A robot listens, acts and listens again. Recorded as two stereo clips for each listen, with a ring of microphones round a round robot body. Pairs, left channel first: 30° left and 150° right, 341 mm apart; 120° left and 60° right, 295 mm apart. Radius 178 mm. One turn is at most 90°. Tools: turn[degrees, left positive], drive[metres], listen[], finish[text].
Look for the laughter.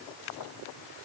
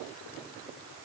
Action: listen[]
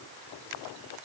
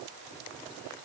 Action: listen[]
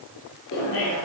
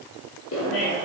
Thought: The laughter: 80° left.
Action: turn[80]
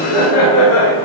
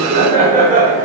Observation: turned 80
Action: finish[Found it: laughter, straight ahead, 1 to 2 m away.]